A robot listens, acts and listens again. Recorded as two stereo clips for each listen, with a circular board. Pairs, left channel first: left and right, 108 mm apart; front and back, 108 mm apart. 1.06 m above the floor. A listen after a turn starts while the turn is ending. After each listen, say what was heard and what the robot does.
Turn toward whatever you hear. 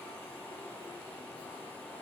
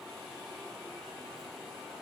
Keep listening.
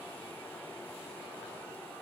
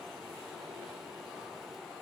Keep listening.
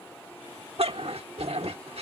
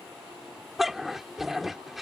The dog barking: 95° right. Turn 95° right.
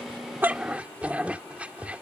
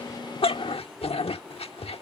The dog barking is now 15° right. Turn 15° right.
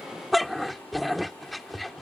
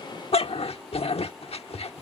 Found it: a dog barking, straight ahead.